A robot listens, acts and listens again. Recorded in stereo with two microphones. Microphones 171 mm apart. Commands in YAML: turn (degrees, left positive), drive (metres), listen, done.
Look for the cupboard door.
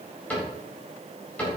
turn: 30
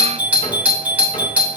listen: true
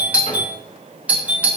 listen: true
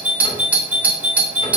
done: "I heard a cupboard door, but can't make it out now. It was about 20° right or 140° left."